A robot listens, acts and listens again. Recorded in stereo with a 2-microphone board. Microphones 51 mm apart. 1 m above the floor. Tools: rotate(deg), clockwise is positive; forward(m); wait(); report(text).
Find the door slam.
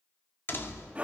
rotate(-45)
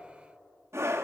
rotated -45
wait()
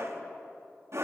report("I heard a door slam, but can't make it out now. It was about straight ahead or 90° left.")